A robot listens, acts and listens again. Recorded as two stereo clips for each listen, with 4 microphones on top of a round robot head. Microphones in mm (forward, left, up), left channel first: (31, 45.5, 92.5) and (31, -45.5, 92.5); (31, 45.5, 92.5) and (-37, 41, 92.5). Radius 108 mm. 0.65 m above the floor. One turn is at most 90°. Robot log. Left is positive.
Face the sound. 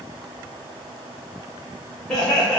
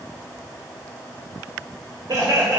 note: The laughter: 175° left.
cmd yaw +90
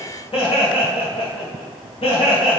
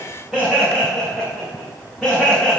note: The laughter is now 100° left.
cmd yaw +90
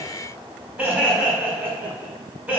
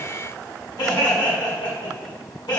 note: The laughter is now 10° right.
cmd yaw -10
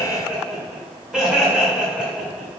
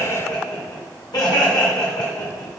end: Facing the laughter, over 4 m away.